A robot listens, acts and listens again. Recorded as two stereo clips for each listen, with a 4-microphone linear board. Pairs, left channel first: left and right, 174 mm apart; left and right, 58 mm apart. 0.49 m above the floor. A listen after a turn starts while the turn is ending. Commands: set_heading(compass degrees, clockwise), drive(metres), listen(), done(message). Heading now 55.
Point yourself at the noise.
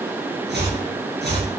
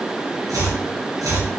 set_heading(145)
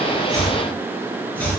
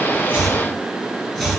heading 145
set_heading(135)
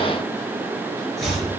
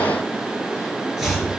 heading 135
done("Facing the chopping.")